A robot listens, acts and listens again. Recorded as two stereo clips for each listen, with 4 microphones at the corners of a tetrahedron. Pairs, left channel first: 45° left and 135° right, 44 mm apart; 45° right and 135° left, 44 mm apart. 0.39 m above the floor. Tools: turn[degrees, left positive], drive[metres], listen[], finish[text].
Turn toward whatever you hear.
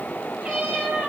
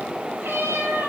Thought: The cat meowing: 160° left.
Action: turn[160]
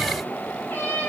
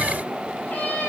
Action: finish[Facing the cat meowing.]